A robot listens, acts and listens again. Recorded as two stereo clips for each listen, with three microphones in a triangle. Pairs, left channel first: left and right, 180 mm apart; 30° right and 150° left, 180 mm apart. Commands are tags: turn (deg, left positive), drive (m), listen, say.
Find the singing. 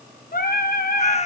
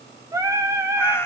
<turn deg="80"/>
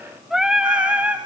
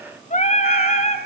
<turn deg="-10"/>
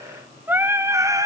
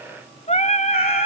<turn deg="-30"/>
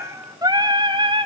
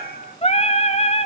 <turn deg="-55"/>
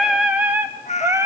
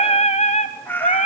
<turn deg="-20"/>
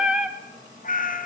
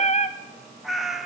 <say>Facing the singing.</say>